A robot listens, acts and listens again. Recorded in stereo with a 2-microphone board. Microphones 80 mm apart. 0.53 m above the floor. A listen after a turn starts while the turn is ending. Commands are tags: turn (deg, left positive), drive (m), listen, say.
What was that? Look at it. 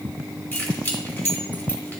<turn deg="25"/>
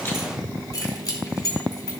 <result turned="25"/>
<turn deg="130"/>
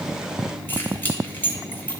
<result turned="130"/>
<turn deg="25"/>
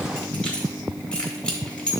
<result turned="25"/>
<turn deg="10"/>
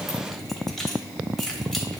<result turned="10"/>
<say>Found it: keys jangling, straight ahead, 2 to 4 m away.</say>